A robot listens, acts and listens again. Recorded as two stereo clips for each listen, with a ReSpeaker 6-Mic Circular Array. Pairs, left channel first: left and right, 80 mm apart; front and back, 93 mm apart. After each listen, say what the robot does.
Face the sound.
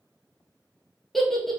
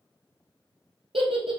Turn 175° left.
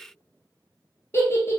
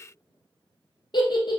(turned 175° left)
Turn 35° left.
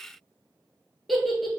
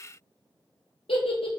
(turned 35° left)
Facing the giggle.